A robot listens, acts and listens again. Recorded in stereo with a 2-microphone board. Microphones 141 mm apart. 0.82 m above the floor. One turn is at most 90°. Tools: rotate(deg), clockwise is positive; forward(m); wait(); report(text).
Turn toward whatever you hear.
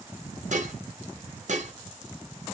rotate(60)
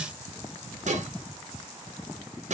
rotate(60)
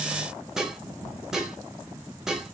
report("Found it: dishes clattering, straight ahead.")